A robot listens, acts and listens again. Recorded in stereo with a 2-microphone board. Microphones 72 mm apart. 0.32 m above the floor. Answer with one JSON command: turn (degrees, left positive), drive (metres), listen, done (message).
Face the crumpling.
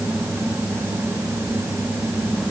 {"listen": true}
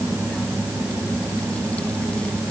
{"listen": true}
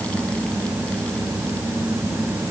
{"done": "I can't make out crumpling."}